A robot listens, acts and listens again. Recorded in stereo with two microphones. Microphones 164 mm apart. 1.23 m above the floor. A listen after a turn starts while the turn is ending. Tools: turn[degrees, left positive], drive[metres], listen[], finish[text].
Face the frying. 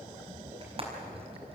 Thought: The frying: about 35° right or 145° right.
Action: turn[-35]
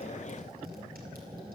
Action: listen[]
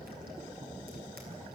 Action: listen[]
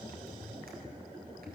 Action: finish[I heard frying, but can't make it out now. It was about straight ahead or 110° right.]